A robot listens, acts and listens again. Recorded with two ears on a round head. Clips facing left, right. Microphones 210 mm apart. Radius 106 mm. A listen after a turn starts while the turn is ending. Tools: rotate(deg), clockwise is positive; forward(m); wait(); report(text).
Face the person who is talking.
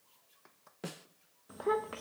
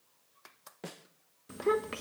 rotate(30)
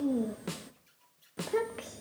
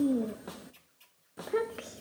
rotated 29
report("Found it: a child speaking, straight ahead, under 1 m away.")